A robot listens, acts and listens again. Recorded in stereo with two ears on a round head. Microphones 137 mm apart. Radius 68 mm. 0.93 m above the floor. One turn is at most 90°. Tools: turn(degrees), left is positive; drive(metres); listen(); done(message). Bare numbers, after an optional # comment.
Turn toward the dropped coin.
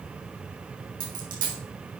# The dropped coin: about 60° right or 120° right.
turn(-60)
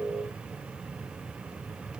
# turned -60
listen()
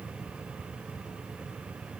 done("I heard a dropped coin, but can't make it out now. It was about straight ahead or 60° right.")